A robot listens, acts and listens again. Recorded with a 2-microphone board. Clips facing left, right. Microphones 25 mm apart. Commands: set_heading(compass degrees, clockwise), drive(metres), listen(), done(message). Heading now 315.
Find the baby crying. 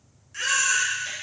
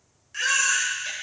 set_heading(345)
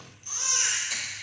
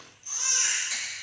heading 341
set_heading(331)
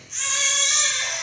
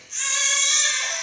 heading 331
done("Found it: a baby crying, straight ahead.")